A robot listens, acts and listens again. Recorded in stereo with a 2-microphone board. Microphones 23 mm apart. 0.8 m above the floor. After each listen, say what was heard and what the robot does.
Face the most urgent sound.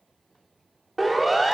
Turn 30° left.
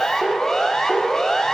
So it is at 150° left. Turn 150° left.
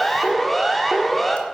Found it: a siren, straight ahead, 2 to 4 m away.